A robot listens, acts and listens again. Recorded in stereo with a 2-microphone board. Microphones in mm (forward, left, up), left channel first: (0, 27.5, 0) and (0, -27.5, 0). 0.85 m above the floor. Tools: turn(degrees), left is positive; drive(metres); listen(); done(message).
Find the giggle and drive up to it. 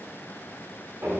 listen()
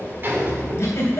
turn(degrees=50)
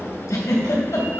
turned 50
turn(degrees=75)
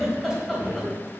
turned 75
drive(metres=1.0)
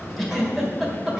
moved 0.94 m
drive(metres=1.0)
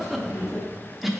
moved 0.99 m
drive(metres=1.0)
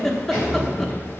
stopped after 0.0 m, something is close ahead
done("Arrived at the giggle, straight ahead.")